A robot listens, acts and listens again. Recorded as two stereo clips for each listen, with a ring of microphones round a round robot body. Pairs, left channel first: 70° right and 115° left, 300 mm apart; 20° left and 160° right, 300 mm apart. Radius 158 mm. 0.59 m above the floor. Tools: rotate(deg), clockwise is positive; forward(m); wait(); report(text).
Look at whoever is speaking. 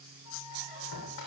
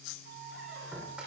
wait()
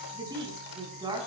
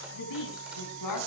rotate(-35)
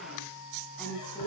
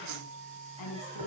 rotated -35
rotate(-20)
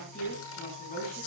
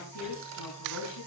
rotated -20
report("Found it: a woman speaking, straight ahead.")